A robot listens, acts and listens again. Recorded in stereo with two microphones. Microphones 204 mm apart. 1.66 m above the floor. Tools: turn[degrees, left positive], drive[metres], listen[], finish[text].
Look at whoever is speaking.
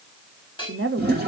Action: turn[-90]
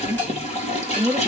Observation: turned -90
Thought: So it is at 10° right.
Action: turn[-10]
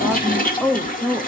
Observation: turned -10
Action: finish[Facing the woman speaking.]